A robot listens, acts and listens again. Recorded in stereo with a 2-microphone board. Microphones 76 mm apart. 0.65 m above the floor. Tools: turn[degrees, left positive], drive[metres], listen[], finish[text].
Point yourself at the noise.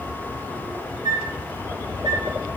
Thought: The flute: about 70° right or 110° right.
Action: turn[-70]
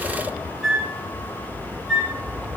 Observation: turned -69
Action: finish[Facing the flute, 2 to 4 m away.]